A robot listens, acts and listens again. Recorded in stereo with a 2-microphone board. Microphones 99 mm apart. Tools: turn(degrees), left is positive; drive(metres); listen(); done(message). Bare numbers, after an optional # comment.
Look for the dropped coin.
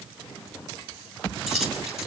turn(-30)
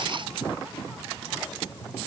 listen()
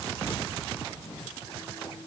done("I heard a dropped coin, but can't make it out now. It was about 25° left or 145° right.")